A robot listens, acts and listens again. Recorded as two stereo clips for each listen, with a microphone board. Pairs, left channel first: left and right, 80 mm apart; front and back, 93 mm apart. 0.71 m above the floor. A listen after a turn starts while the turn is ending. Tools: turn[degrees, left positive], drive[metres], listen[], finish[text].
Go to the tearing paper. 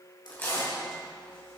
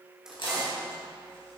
Thought: The tearing paper: 25° left.
Action: turn[25]
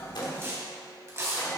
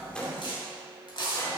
Thought: The tearing paper is now 30° right.
Action: turn[-30]
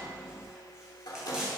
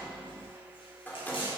Action: drive[1.0]
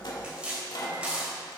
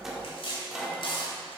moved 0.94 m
Thought: The tearing paper is now 10° right.
Action: turn[-10]
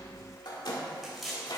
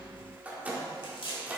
Action: drive[1.0]
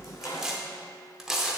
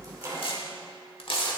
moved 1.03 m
Action: drive[1.0]
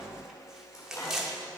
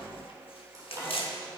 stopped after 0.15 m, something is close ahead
Action: finish[I am next to the tearing paper.]